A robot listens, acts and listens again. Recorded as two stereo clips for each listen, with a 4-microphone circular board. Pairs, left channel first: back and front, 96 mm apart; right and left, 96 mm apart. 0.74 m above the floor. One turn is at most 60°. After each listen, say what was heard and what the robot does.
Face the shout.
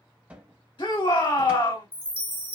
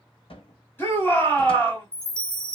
The shout: 155° right. Turn 60° right.
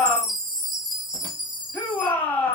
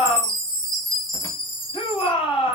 The shout is now 110° right. Turn 60° right.
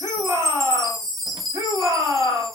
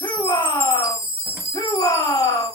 The shout is now 55° right. Turn 55° right.
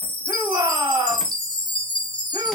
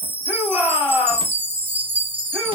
The shout is now 10° left. Turn 10° left.
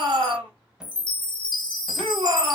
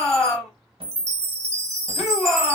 Found it: a shout, straight ahead, 2 to 4 m away.